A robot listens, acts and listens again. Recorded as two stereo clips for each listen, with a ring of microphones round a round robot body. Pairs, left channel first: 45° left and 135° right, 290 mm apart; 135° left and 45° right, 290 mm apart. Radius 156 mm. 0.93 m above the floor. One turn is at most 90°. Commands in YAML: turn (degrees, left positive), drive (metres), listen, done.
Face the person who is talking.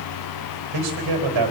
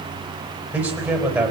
turn: -90
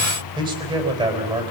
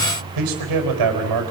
turn: -60
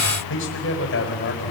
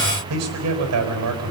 turn: -10
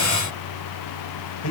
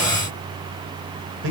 done: "Facing the man speaking, over 4 m away."